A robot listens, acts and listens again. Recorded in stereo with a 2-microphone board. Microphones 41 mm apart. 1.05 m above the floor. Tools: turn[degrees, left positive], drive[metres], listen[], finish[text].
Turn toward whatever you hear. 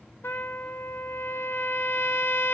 Thought: The trumpet: about 65° left or 115° left.
Action: turn[65]
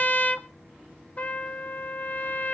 Thought: So it is at 40° left.
Action: turn[40]
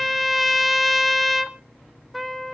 Action: finish[Found it: a trumpet, straight ahead, under 1 m away.]